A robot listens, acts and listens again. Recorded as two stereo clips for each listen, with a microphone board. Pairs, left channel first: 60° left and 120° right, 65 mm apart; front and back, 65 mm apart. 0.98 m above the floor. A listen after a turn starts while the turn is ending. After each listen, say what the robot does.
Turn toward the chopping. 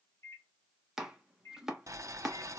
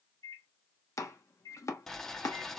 Turn 35° right.
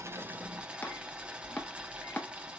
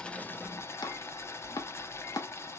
Facing the chopping, under 1 m away.